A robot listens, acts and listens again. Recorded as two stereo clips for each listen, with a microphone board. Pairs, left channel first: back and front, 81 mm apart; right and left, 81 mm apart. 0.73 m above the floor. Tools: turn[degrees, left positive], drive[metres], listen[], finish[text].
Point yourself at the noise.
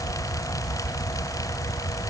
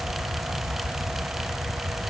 Action: listen[]
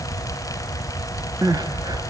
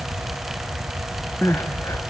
Thought: The crying: 35° right.
Action: turn[-35]
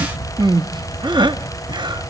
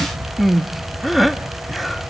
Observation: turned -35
Action: finish[Facing the crying, 1 to 2 m away.]